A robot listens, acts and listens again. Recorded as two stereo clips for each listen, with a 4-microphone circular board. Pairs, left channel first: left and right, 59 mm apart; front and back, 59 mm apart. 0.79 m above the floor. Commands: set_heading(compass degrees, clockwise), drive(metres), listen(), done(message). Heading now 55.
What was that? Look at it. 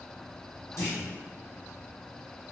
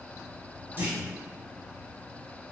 set_heading(295)
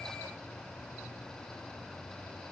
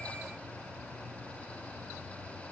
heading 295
done("Facing where the clunk came from. I can't hear it now.")